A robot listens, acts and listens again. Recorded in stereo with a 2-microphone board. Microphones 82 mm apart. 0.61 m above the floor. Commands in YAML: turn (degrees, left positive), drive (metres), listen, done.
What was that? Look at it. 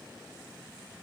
listen: true
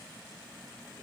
listen: true
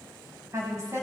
turn: -40
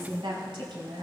turn: -100
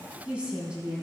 turn: -15
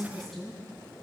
done: "Facing the woman speaking, over 4 m away."